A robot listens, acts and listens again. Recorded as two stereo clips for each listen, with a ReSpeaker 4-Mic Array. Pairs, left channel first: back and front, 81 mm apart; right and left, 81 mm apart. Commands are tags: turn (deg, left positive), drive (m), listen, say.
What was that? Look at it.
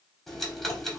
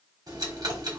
<turn deg="95"/>
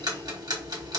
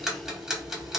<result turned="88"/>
<turn deg="10"/>
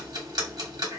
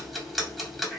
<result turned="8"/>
<say>Found it: ticking, straight ahead, 1 to 2 m away.</say>